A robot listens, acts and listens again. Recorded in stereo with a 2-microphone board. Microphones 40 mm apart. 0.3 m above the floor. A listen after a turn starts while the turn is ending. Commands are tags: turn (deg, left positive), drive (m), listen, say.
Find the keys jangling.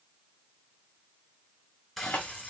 <turn deg="40"/>
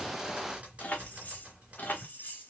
<turn deg="45"/>
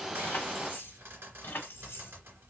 <turn deg="60"/>
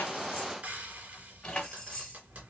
<turn deg="20"/>
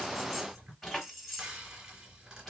<say>Found it: keys jangling, straight ahead.</say>